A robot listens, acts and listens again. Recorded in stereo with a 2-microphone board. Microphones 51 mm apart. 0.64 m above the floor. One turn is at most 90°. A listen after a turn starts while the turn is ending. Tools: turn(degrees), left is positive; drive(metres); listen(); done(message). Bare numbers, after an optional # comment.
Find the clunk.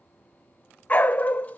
listen()
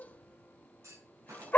turn(-90)
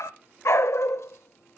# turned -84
done("Facing where the clunk came from. I can't hear it now.")